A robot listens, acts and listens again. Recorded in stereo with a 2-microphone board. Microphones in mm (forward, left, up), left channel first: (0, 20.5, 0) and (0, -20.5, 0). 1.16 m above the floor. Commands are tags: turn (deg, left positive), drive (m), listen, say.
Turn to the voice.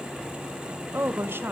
<turn deg="-60"/>
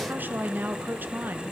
<turn deg="-55"/>
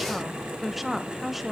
<say>Found it: a woman speaking, straight ahead.</say>